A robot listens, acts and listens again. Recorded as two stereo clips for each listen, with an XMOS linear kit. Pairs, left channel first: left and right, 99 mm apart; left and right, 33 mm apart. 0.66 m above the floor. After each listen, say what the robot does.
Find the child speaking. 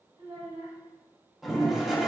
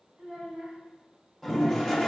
Turn 90° right.
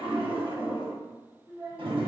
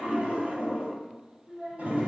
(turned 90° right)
Turn 25° right.
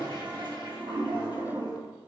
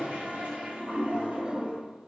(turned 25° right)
Keep listening.
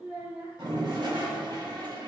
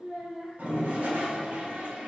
Turn 10° right.
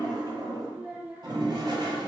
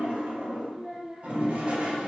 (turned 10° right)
Found it: a child speaking, straight ahead, 2 to 4 m away.